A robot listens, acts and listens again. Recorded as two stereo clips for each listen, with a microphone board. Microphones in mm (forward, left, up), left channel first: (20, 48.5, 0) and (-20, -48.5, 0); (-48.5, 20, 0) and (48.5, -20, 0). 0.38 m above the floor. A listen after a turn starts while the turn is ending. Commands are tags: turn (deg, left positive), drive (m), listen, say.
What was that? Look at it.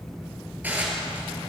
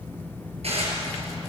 <turn deg="-40"/>
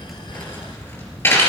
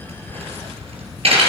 <say>Found it: dishes clattering, straight ahead, over 4 m away.</say>